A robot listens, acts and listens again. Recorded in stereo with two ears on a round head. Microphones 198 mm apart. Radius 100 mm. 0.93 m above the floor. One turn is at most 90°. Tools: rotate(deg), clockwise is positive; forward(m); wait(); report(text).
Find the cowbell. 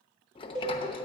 rotate(20)
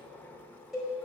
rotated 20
report("Found it: a cowbell, straight ahead, over 4 m away.")